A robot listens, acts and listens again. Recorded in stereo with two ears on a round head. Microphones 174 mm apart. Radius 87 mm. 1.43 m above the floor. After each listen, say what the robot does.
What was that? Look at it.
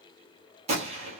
Turn 35° right.
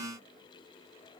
Keep listening.
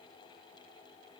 I heard a gunshot, but can't make it out now. It was about straight ahead or 110° right.